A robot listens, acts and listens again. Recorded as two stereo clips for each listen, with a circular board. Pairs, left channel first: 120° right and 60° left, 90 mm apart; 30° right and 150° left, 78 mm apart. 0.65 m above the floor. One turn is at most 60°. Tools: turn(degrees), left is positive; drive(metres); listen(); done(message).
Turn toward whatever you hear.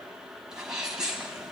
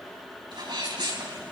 turn(degrees=60)
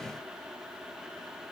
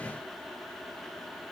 turn(degrees=60)
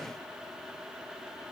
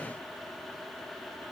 turn(degrees=20)
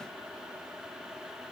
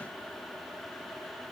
done("Facing where the sneeze came from. I can't hear it now.")